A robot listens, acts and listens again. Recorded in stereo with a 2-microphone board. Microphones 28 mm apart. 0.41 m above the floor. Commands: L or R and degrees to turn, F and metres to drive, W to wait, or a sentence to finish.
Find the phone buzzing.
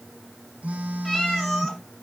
R70
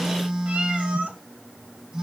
R40
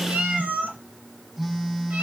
R15
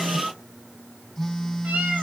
Facing the phone buzzing.